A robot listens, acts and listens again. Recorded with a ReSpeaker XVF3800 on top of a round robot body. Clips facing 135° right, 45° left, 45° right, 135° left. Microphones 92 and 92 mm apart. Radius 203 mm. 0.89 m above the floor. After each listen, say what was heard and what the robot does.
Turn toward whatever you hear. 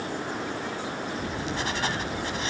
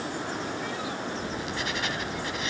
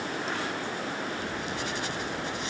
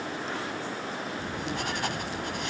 The writing: 170° left. Turn 170° left.
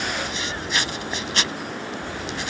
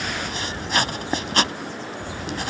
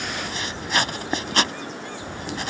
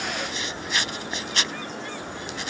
Facing the writing.